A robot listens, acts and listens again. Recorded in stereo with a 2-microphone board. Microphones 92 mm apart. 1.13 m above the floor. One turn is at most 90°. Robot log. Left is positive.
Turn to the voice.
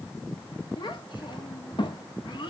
note: The child speaking: about 60° left or 120° left.
cmd yaw +60
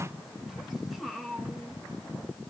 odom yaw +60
end: Found it: a child speaking, straight ahead, 1 to 2 m away.